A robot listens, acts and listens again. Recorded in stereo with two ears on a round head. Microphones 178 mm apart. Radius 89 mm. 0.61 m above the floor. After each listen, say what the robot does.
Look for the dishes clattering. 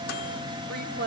Keep listening.
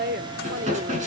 Turn 40° right.
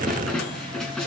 Facing the dishes clattering, over 4 m away.